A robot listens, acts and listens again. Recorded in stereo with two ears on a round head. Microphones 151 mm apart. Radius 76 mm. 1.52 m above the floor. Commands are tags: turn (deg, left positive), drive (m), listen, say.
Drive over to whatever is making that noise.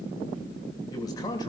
<turn deg="25"/>
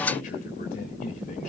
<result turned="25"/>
<turn deg="130"/>
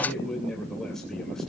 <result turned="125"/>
<drive m="1.0"/>
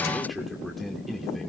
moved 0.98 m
<drive m="1.0"/>
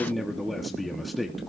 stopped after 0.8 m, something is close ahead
<say>Arrived at the man speaking, straight ahead.</say>